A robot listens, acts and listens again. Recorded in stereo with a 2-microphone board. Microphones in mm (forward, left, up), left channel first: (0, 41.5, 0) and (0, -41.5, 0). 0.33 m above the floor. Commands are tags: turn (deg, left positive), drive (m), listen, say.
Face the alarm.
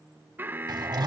<turn deg="-25"/>
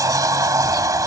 <listen/>
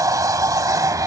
<listen/>
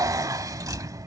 <say>I heard an alarm, but can't make it out now. It was about straight ahead or 130° right.</say>